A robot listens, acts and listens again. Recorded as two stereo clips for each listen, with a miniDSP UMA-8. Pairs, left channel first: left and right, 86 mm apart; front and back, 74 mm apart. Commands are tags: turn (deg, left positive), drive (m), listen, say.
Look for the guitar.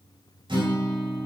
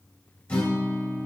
<turn deg="-75"/>
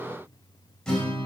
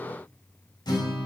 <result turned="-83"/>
<turn deg="10"/>
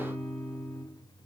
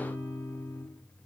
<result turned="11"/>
<say>Facing the guitar, 2 to 4 m away.</say>